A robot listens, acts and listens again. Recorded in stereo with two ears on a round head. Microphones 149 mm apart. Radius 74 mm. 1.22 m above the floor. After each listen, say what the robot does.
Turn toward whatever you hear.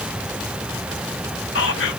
Turn 90° left.
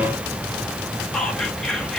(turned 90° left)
Found it: whispering, straight ahead, under 1 m away.